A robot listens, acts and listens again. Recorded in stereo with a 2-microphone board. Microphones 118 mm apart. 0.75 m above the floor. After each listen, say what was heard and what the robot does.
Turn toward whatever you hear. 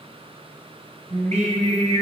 Turn 90° right.
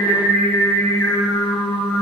So it is at 20° left. Turn 20° left.
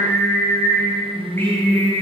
The singing is now 20° left. Turn 20° left.
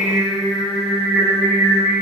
Facing the singing.